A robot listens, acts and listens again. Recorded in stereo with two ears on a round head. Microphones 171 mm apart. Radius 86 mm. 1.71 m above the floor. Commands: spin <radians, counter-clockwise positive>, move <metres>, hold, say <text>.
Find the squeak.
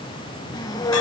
spin 0.35
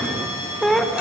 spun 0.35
say Facing the squeak, 1 to 2 m away.